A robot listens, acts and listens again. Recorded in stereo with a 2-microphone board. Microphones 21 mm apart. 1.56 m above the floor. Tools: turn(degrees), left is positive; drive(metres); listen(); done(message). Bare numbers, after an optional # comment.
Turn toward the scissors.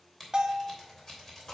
# The scissors: about 25° left or 155° left.
turn(25)
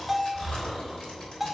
listen()
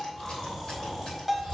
listen()
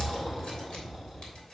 done("I heard scissors, but can't make it out now. It was about straight ahead or 130° left.")